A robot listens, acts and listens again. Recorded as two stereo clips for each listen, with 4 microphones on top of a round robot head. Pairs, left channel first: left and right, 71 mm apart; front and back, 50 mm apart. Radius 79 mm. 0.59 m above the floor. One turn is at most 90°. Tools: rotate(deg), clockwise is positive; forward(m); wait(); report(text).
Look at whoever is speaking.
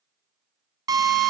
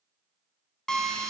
wait()
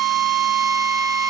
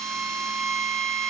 wait()
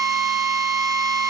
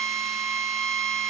report("I can't make out anyone speaking, only a drill.")